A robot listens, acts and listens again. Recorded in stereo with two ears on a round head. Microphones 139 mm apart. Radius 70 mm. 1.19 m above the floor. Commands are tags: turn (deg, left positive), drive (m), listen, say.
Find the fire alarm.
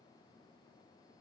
<listen/>
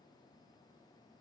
<listen/>
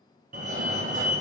<turn deg="-55"/>
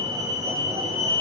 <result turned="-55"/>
<turn deg="-25"/>
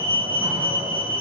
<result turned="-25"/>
<turn deg="-15"/>
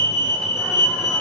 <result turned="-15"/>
<say>Found it: a fire alarm, straight ahead, 1 to 2 m away.</say>